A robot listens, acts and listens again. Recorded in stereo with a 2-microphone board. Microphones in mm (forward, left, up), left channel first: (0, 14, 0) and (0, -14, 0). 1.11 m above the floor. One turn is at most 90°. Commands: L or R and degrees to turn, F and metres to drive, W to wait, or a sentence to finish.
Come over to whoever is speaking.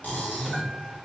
W
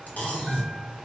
W
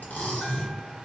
I can't make out anyone speaking to turn to.